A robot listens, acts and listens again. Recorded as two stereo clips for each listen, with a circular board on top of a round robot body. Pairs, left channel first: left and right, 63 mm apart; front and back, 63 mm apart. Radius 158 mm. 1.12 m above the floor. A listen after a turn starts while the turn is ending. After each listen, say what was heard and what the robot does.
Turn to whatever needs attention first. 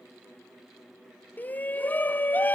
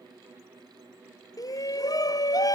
The shout: 25° left. Turn 25° left.
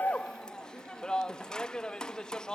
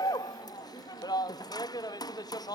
The shout is now 10° left. Turn 10° left.
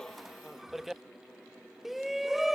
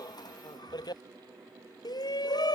Facing the shout.